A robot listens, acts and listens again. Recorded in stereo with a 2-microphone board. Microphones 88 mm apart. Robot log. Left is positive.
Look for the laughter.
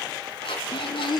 note: The laughter: about 60° left or 120° left.
cmd yaw +60
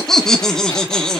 note: So it is at 10° left.
cmd yaw +10
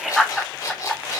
end: Facing the laughter, 1 to 2 m away.